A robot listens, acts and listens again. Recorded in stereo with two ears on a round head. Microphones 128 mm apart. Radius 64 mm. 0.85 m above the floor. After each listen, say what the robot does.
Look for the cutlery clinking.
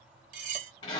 Turn 55° right.
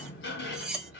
Found it: cutlery clinking, straight ahead.